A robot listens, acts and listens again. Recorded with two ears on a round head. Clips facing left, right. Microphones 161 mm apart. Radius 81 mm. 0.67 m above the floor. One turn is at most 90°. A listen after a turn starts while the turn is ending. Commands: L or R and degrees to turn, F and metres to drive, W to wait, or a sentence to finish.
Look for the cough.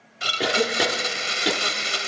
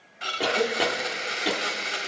L30
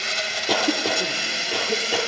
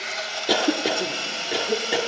R15
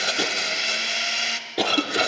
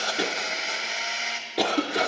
Found it: a cough, straight ahead.